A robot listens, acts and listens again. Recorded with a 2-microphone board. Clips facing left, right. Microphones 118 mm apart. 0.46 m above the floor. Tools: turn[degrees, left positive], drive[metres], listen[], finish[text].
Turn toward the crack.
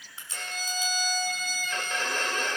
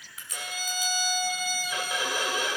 Thought: The crack: about 30° left or 150° left.
Action: turn[30]
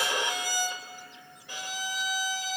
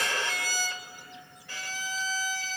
Action: listen[]
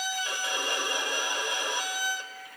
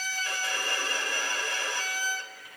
Action: finish[I heard a crack, but can't make it out now. It was about straight ahead or 120° left.]